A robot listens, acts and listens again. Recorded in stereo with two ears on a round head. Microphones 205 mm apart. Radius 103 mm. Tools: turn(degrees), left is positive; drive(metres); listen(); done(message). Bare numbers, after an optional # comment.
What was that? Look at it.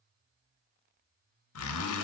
# The zipper: about 70° left or 110° left.
turn(70)
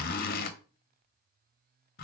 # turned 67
# So it is at 40° left.
turn(40)
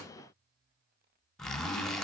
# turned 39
done("Facing the zipper.")